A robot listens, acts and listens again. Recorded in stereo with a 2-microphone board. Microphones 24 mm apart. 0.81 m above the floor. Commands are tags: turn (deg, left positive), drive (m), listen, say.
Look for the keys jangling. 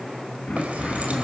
<turn deg="-90"/>
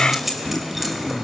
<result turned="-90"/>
<say>Found it: keys jangling, straight ahead, 2 to 4 m away.</say>